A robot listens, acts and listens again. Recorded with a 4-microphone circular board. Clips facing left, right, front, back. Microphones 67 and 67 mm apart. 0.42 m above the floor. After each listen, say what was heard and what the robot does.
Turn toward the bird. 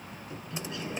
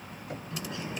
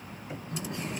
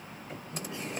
The bird: 35° right. Turn 35° right.
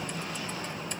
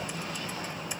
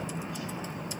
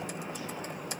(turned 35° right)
Facing the bird, over 4 m away.